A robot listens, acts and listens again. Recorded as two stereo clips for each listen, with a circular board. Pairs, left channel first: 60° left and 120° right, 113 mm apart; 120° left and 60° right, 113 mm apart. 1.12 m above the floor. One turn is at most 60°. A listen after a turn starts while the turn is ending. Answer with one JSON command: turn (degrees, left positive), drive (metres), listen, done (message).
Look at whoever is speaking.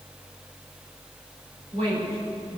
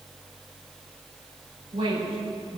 {"turn": -60}
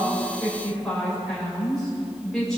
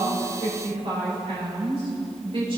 {"turn": -25}
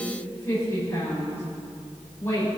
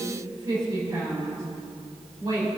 {"done": "Found it: a woman speaking, straight ahead, over 4 m away."}